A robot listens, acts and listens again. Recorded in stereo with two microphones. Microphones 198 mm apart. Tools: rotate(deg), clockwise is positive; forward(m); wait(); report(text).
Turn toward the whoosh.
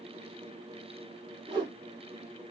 rotate(25)
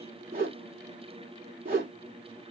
rotate(135)
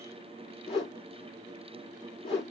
rotate(-30)
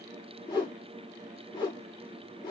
rotate(-20)
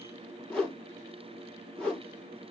report("Found it: a whoosh, straight ahead, 2 to 4 m away.")